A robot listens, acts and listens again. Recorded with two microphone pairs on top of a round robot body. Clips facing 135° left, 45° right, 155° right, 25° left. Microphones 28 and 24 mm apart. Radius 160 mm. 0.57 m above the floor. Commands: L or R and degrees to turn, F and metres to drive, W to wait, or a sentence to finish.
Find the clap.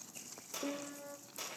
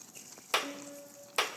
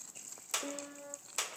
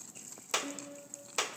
R50
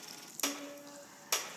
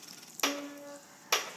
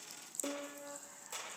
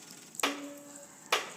L15
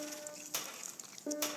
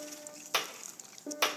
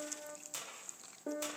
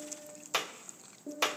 Found it: a clap, straight ahead, 1 to 2 m away.